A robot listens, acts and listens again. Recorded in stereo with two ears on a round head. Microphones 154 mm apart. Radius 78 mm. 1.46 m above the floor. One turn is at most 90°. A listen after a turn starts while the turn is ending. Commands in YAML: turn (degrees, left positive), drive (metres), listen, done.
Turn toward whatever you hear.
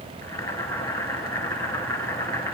turn: 20
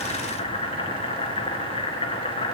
turn: 90
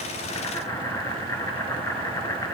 turn: 20
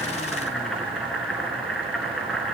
done: "Facing the boiling, 2 to 4 m away."